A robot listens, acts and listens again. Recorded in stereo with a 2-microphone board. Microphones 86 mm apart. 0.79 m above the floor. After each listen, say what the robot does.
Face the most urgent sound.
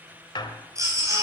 Turn 40° right.
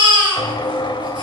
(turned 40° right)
Turn 105° right.
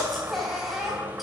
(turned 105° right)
Found it: a baby crying, straight ahead.